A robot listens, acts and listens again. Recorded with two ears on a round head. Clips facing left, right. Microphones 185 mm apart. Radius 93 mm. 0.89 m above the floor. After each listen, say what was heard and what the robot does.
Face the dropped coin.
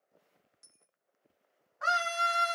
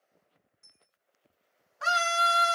The dropped coin: about 45° left or 135° left. Turn 45° left.
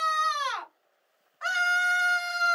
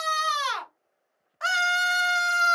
Keep listening.
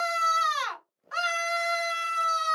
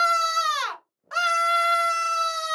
I heard a dropped coin, but can't make it out now. It was about straight ahead or 90° left.